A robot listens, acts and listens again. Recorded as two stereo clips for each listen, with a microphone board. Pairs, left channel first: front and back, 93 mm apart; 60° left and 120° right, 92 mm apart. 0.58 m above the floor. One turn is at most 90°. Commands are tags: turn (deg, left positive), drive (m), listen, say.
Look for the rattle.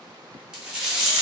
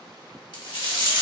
<turn deg="90"/>
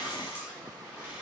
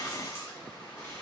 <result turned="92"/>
<listen/>
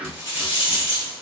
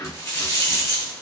<say>Found it: a rattle, straight ahead, 1 to 2 m away.</say>